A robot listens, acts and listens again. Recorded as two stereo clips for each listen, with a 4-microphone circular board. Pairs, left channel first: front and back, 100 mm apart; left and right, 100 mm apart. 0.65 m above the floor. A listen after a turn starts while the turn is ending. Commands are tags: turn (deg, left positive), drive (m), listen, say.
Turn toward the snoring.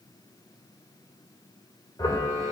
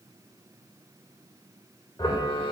<turn deg="120"/>
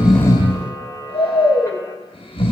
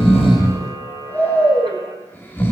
<turn deg="20"/>
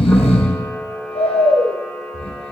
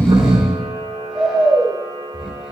<say>Found it: snoring, straight ahead, 2 to 4 m away.</say>